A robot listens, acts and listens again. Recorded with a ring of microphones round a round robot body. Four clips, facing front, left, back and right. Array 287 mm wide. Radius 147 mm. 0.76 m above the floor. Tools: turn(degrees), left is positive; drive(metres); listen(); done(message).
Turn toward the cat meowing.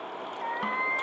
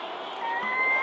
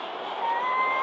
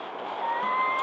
turn(degrees=150)
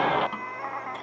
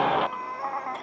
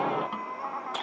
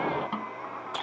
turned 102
turn(degrees=75)
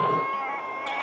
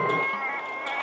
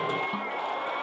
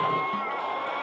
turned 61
turn(degrees=35)
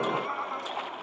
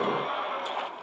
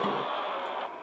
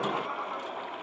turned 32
listen()
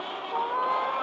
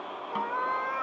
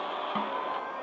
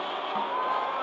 turn(degrees=25)
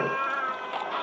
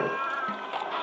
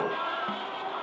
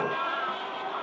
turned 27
listen()
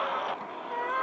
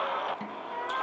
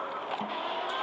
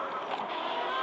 listen()
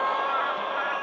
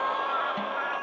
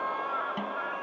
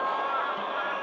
done("I heard a cat meowing from this way, but can't make it out now.")